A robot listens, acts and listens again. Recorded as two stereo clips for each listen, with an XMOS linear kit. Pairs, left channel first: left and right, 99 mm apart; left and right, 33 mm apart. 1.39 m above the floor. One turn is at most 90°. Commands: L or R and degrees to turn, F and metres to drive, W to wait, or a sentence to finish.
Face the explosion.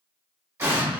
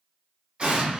R25
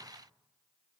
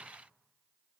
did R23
W
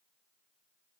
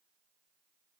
I heard an explosion, but can't make it out now. It was about 5° right or 130° right.